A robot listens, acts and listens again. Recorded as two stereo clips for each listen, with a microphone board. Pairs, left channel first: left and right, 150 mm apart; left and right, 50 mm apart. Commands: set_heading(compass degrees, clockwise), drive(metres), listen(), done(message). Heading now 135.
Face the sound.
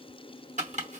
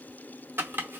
set_heading(185)
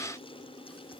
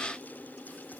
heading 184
listen()
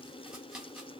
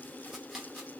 done("Found it: chopping, straight ahead.")